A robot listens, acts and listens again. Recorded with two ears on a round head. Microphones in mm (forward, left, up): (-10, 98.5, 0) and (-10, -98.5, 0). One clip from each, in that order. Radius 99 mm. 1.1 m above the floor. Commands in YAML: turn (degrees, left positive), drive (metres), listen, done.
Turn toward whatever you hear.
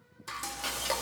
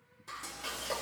turn: 40
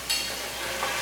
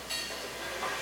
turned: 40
turn: 100
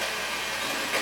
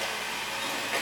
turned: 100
done: "Found it: frying, straight ahead, 1 to 2 m away."